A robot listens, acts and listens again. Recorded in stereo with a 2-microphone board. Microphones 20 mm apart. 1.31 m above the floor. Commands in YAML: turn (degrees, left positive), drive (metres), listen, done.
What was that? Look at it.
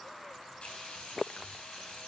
turn: 55
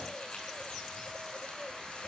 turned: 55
turn: 70
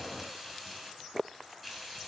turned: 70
done: "Facing the frying, over 4 m away."